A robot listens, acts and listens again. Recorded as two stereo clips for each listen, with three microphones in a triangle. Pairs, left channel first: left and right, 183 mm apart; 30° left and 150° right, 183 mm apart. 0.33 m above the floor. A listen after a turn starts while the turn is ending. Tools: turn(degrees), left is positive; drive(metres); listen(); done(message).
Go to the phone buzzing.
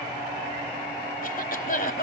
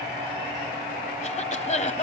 listen()
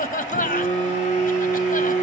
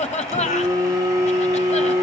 turn(degrees=140)
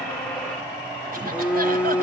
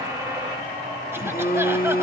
drive(metres=1.0)
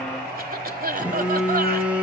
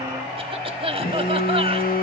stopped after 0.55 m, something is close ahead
done("Blocked. The phone buzzing is further on, straight ahead.")